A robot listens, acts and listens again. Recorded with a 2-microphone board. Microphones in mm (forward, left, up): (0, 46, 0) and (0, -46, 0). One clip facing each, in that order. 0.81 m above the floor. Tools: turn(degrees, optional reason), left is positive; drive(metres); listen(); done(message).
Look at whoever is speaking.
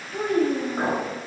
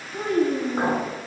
turn(degrees=60, reason="The child speaking: about 60° left or 120° left.")
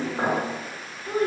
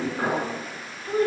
turn(degrees=25, reason="So it is at 25° left.")
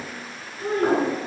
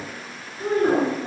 turn(degrees=-40, reason="The child speaking is now 40° right.")
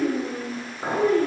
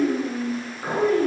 turn(degrees=-15, reason="The child speaking is now 15° right.")
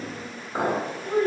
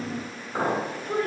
done("Found it: a child speaking, straight ahead, 1 to 2 m away.")